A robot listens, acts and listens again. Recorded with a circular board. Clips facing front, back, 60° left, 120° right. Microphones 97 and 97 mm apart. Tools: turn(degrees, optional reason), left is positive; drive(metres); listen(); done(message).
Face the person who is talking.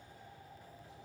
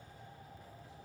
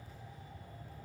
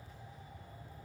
listen()
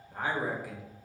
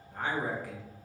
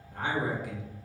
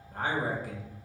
turn(degrees=-80, reason="The man speaking: 80° right.")
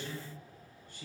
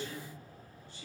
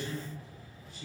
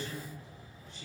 turn(degrees=-25, reason="The man speaking is now 25° right.")
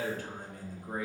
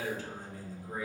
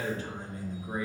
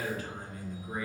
done("Found it: a man speaking, straight ahead.")